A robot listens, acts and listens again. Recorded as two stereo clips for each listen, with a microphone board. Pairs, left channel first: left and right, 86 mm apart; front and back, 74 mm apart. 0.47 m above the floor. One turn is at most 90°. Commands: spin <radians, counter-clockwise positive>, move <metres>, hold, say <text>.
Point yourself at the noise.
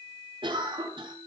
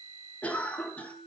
spin -1.22
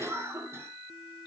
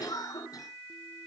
spin -0.52
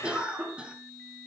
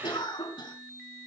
spin -0.17
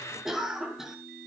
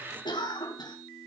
say Facing the cough.